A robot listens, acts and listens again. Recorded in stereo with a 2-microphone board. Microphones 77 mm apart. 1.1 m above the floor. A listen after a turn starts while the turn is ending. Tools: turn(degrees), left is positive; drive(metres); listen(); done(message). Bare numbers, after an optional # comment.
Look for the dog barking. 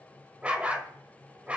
# The dog barking: about 15° right or 165° right.
turn(-15)
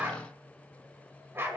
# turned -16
# So it is at 145° right.
turn(-145)
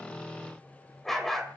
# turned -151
done("Facing the dog barking.")